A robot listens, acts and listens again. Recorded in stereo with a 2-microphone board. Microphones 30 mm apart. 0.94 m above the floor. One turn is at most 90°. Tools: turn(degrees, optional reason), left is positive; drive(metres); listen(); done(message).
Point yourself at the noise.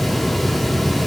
listen()
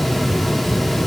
listen()
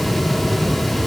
done("I can't make out anything to turn to.")